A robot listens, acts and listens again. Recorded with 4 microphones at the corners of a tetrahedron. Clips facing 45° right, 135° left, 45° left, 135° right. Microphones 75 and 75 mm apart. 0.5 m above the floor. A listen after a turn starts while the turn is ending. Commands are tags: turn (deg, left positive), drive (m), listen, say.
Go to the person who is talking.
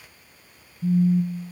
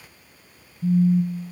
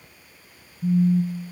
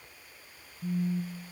<listen/>
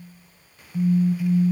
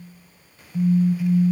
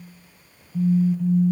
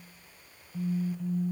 <listen/>
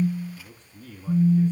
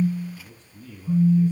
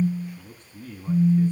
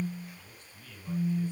<drive m="1.0"/>
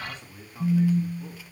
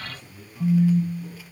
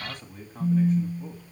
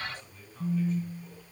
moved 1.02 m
<turn deg="10"/>
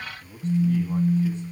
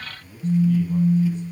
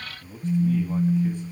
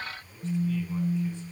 <drive m="1.0"/>
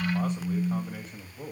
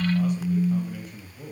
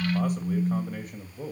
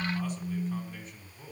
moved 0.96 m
<turn deg="10"/>
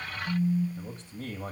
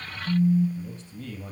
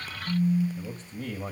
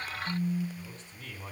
<drive m="1.0"/>
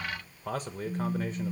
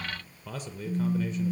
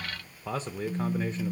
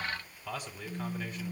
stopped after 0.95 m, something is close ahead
<turn deg="-10"/>
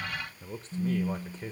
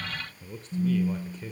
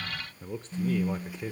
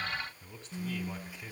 <say>I am next to the man speaking.</say>